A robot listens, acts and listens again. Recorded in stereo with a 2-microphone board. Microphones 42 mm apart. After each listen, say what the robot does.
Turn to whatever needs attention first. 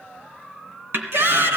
Turn 70° right.
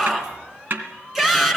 Turn 10° right.
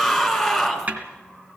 Facing the shout.